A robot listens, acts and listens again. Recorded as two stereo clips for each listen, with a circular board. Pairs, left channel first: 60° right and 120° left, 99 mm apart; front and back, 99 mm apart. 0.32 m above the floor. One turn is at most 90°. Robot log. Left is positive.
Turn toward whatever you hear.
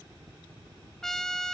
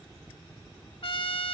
note: The trumpet: 25° left.
cmd yaw +25
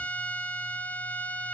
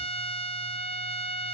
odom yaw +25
note: The trumpet is now 15° left.
cmd yaw +15
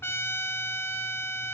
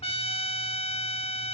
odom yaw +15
end: Found it: a trumpet, straight ahead.